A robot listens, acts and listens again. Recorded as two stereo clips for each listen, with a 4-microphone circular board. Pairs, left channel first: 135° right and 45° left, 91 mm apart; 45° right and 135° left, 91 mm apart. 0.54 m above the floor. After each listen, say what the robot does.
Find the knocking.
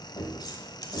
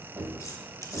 Turn 160° right.
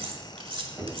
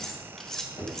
Turn 25° right.
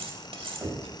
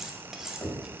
Turn 15° right.
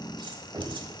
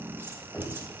Turn 10° left.
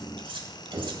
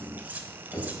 Found it: knocking, straight ahead.